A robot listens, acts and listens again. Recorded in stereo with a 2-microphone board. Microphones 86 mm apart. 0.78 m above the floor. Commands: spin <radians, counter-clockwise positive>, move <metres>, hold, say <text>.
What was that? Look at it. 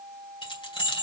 spin 1.57
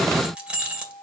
spin -0.17
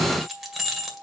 say Facing the keys jangling.